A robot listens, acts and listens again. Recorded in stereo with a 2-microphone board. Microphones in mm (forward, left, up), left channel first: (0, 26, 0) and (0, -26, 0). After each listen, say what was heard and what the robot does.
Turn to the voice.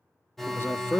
The man speaking: about 45° left or 135° left. Turn 45° left.
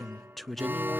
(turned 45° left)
Found it: a man speaking, straight ahead, 1 to 2 m away.